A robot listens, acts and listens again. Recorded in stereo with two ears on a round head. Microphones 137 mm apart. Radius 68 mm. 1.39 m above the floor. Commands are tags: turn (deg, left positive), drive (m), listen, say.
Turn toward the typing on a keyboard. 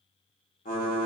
<turn deg="55"/>
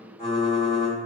<turn deg="40"/>
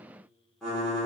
<say>Found it: typing on a keyboard, straight ahead, 1 to 2 m away.</say>